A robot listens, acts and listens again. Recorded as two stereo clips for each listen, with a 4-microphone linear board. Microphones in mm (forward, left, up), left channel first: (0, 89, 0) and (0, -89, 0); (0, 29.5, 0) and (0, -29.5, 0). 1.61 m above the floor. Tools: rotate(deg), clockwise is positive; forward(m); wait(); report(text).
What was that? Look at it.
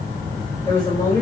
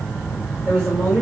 rotate(-15)
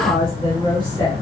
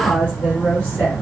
rotate(-25)
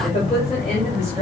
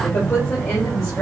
rotate(-140)
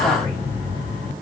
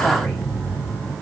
wait()
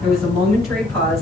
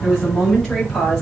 report("Facing the woman speaking, over 4 m away.")